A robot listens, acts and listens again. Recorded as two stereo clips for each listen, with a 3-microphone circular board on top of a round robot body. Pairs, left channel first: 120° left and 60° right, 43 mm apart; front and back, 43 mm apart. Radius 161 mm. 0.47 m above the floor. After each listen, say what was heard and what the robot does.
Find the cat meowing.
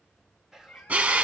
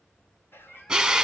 The cat meowing: 60° left. Turn 60° left.
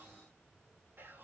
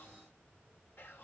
Keep listening.
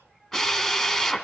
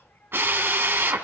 Keep listening.
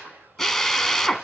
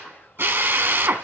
Facing where the cat meowing came from. I can't hear it now.